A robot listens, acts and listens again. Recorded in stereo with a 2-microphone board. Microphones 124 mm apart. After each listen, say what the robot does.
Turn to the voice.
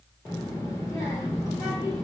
Turn 30° left.
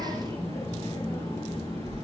Turn 115° left.
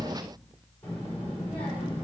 Turn 20° left.
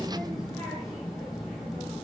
Facing the child speaking.